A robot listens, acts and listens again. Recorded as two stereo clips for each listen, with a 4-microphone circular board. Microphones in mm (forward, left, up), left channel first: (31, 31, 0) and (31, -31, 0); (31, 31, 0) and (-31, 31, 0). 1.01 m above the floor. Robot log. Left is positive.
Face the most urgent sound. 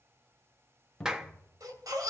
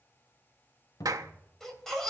note: The baby crying: 85° right.
cmd yaw -85
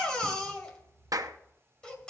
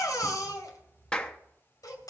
note: The baby crying is now 15° left.
cmd yaw +15
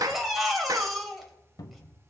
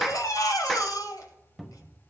end: Facing the baby crying, 2 to 4 m away.